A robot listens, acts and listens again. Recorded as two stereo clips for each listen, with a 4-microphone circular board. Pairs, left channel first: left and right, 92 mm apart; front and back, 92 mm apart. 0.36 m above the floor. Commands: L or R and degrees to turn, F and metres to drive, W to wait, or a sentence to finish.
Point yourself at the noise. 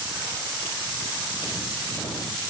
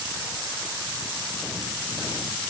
W
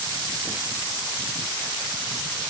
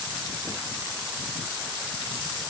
W
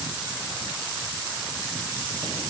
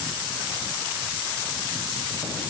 I can't make out anything.